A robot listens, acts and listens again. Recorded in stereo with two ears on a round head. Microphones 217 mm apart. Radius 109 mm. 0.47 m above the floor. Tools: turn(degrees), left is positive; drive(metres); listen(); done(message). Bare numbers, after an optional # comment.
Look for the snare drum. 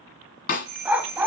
# The snare drum: about 40° left or 140° left.
turn(40)
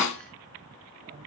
# So it is at 105° left.
turn(105)
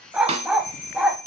# The snare drum is now 30° right.
turn(-30)
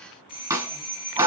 # The snare drum is now 15° right.
turn(-15)
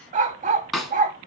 done("Found it: a snare drum, straight ahead.")